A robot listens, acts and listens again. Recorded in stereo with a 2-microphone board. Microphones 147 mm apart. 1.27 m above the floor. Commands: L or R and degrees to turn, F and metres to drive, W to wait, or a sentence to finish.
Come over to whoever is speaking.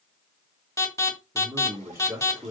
R20
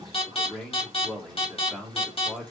F1.0
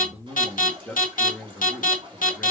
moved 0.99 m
L10
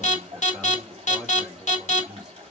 F1.0
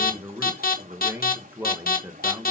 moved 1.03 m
R15
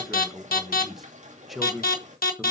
F1.0
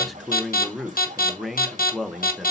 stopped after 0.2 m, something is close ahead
Arrived at the man speaking, straight ahead.